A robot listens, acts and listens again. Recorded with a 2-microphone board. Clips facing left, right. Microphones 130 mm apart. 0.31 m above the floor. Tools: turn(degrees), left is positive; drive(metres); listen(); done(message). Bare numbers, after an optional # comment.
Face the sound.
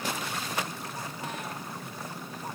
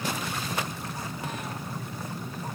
listen()
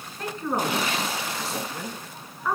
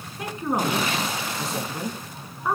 # The woman speaking: about 25° right or 155° right.
turn(-25)
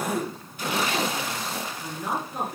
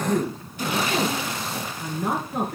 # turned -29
# So it is at 120° right.
turn(-120)
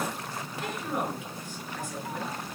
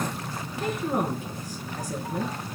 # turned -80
# The woman speaking is now 40° right.
turn(-40)
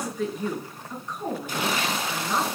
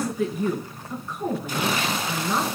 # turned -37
done("Found it: a woman speaking, straight ahead.")